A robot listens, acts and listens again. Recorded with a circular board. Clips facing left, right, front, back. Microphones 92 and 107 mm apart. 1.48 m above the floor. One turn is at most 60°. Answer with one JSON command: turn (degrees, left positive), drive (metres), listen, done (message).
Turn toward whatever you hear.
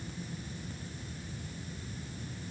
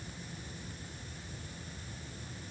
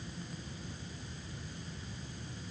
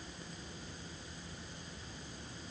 {"listen": true}
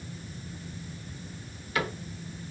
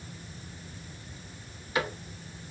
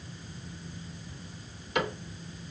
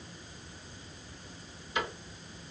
{"turn": -20}
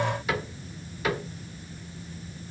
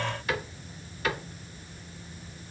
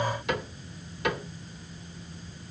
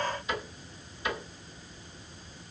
{"done": "Facing the cupboard door, 2 to 4 m away."}